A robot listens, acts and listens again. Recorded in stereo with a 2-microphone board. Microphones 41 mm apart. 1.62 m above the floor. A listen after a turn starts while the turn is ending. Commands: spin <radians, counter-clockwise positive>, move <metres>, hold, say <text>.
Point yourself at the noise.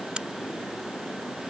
spin -0.35
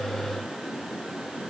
hold
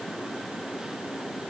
say I heard a crack, but can't make it out now. It was about straight ahead or 140° right.